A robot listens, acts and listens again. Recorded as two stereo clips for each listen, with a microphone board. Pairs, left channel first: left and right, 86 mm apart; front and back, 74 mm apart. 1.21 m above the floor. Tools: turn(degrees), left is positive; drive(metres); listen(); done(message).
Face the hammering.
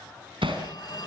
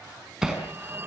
turn(degrees=-95)
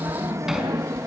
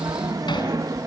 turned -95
listen()
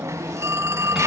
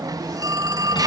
listen()
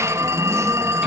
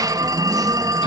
done("Facing where the hammering came from. I can't hear it now.")